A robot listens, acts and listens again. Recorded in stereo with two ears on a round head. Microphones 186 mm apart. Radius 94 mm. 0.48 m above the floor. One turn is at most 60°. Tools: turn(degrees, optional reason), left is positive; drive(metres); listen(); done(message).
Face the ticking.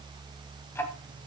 turn(degrees=30)
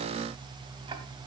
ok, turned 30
listen()
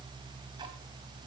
listen()
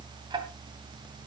turn(degrees=-20, reason="So it is at 20° right.")
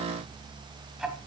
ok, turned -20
done("Found it: ticking, straight ahead, 2 to 4 m away.")